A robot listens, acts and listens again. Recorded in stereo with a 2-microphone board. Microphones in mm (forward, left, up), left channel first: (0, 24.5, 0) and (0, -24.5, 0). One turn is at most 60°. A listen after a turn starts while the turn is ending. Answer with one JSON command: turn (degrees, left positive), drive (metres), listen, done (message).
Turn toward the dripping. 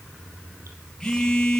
{"listen": true}
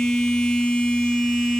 {"listen": true}
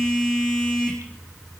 {"done": "I can't make out dripping to turn to."}